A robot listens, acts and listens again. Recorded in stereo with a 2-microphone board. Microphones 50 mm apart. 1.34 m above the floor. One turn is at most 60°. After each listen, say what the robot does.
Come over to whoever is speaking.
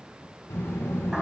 Turn 60° left.
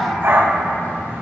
Turn 50° left.
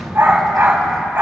Drive 1.0 m forward.
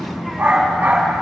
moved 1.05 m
Drive 1.0 m forward.
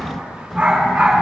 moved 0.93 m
Drive 1.0 m forward.
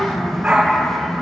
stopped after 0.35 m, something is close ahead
Arrived at the child speaking, straight ahead.